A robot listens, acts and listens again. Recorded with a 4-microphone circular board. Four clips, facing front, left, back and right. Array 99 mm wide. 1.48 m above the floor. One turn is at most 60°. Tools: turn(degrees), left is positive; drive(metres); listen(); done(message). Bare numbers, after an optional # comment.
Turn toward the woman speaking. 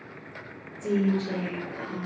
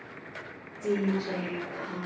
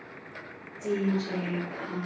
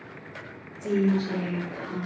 # The woman speaking: 110° left.
turn(60)
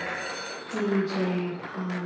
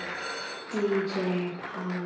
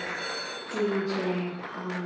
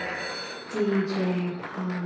# The woman speaking is now 100° left.
turn(60)
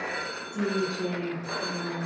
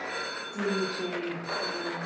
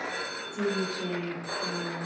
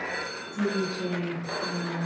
# The woman speaking is now 80° left.
turn(60)
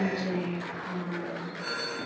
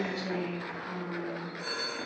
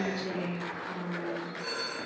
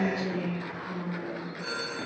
# The woman speaking is now 20° left.
turn(20)
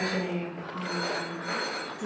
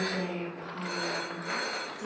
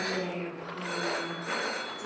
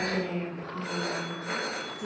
done("Found it: a woman speaking, straight ahead.")